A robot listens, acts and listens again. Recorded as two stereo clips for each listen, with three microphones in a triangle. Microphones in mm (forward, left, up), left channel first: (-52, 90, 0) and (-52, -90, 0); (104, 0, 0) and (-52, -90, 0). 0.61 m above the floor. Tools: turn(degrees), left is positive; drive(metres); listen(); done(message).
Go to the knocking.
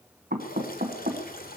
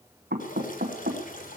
turn(degrees=-120)
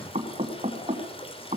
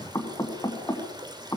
turn(degrees=-40)
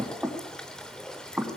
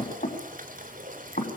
turn(degrees=-10)
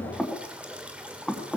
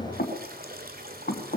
drive(metres=1.0)
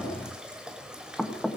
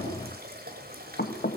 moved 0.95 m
drive(metres=1.0)
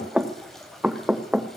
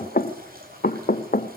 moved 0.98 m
drive(metres=1.0)
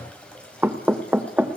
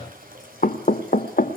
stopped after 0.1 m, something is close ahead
turn(degrees=-10)
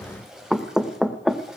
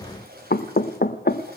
done("Arrived at the knocking, straight ahead.")